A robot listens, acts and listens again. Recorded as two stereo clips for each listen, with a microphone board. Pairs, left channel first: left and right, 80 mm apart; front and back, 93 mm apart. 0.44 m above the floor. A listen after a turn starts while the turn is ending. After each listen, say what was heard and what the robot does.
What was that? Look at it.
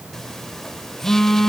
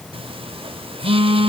The phone buzzing: 175° left. Turn 175° left.
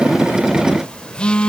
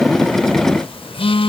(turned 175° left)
The phone buzzing is now 10° left. Turn 10° left.
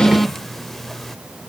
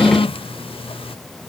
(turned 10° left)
Facing the phone buzzing, under 1 m away.